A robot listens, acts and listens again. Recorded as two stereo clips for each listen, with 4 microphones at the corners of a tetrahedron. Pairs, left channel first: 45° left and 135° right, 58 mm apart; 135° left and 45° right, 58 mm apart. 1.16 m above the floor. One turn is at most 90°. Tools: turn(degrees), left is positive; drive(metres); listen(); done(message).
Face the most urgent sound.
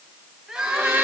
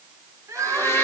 turn(degrees=-55)
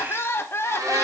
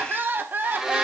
done("Facing the crying, 1 to 2 m away.")